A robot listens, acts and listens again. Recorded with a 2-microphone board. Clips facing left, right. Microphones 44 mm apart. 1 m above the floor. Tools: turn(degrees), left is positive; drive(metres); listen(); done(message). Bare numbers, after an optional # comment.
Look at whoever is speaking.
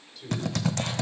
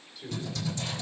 turn(-30)
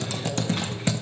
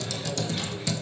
listen()
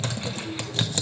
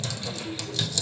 listen()
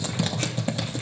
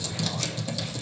done("I heard a man speaking, but can't make it out now. It was about 20° left or 140° right.")